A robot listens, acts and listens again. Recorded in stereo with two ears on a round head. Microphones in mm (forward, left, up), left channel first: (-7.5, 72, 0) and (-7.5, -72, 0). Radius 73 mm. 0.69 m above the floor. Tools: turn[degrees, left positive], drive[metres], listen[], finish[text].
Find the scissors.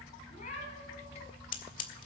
Thought: The scissors: about 55° left or 125° left.
Action: turn[55]
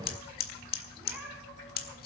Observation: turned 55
Thought: So it is at 65° left.
Action: turn[65]
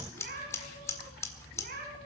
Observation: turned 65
Thought: The scissors is now 20° left.
Action: turn[20]
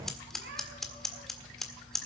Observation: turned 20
Action: finish[Found it: scissors, straight ahead, 1 to 2 m away.]